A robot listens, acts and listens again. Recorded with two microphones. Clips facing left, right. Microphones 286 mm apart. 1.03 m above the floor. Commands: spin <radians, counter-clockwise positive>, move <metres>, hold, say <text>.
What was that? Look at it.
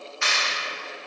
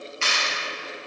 spin -0.52
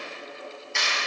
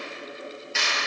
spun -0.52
say Facing the clap, 1 to 2 m away.